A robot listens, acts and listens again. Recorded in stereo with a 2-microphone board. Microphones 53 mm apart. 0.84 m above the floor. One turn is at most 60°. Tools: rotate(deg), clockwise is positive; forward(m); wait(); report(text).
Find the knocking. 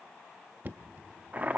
rotate(35)
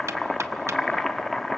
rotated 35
wait()
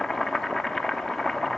wait()
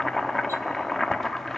report("I heard knocking, but can't make it out now. It was about straight ahead or 110° right.")